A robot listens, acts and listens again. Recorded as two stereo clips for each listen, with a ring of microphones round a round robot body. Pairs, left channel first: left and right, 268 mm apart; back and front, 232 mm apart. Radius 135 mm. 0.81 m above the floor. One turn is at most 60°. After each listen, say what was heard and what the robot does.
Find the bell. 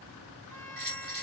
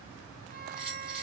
The bell: 100° right. Turn 60° right.
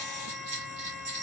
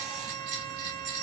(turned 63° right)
The bell is now 40° right. Turn 40° right.
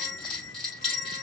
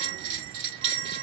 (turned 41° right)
Found it: a bell, straight ahead, 2 to 4 m away.